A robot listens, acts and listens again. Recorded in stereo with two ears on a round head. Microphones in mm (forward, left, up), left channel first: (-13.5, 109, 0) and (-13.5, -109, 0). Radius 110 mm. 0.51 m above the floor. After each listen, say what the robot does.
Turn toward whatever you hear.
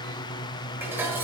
Turn 30° right.
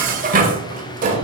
Turn 140° right.
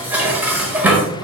Turn 10° right.
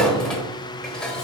Facing the dishes clattering.